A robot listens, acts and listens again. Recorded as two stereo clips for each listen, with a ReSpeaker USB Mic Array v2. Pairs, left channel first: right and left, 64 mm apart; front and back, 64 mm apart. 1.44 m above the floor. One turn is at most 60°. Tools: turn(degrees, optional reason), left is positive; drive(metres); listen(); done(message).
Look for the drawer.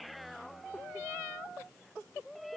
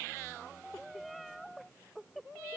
listen()
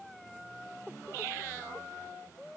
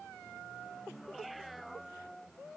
listen()
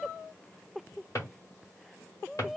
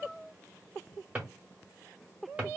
turn(degrees=-60, reason="The drawer: 115° right.")
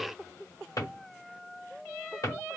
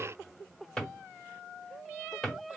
turn(degrees=-60, reason="The drawer is now 85° right.")
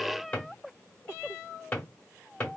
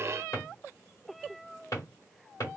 turn(degrees=-30, reason="The drawer is now 30° right.")
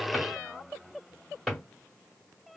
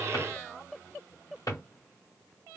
done("Facing the drawer, 1 to 2 m away.")